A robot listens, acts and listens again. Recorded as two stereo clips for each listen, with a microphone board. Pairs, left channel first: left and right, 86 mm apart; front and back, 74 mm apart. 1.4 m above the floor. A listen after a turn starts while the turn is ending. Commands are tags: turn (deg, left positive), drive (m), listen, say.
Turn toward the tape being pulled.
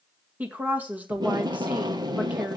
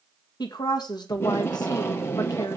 <turn deg="-55"/>
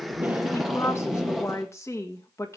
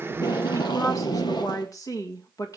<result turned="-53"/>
<say>Found it: tape being pulled, straight ahead, 1 to 2 m away.</say>